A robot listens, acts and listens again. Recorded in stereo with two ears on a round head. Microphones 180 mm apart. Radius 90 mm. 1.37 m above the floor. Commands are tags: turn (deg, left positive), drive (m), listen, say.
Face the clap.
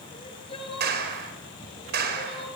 <turn deg="-55"/>
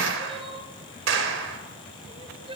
<turn deg="-70"/>
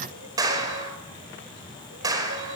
<turn deg="-20"/>
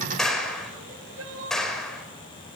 <say>Facing the clap.</say>